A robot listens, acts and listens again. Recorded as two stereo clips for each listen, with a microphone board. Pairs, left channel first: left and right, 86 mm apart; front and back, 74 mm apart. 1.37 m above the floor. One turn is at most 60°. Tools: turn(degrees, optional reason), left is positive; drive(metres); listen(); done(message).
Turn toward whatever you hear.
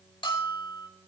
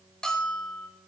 turn(degrees=60, reason="The bell: 80° left.")
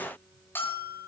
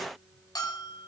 turn(degrees=25, reason="The bell is now 25° left.")
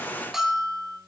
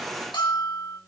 done("Facing the bell, over 4 m away.")